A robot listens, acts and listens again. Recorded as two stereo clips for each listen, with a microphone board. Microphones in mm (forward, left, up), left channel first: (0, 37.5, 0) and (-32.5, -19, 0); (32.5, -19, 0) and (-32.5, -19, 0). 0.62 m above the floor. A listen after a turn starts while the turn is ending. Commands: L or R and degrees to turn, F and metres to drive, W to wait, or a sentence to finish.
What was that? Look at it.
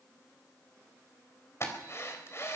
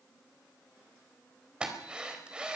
L105
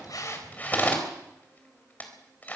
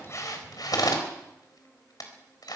Facing the drill, 2 to 4 m away.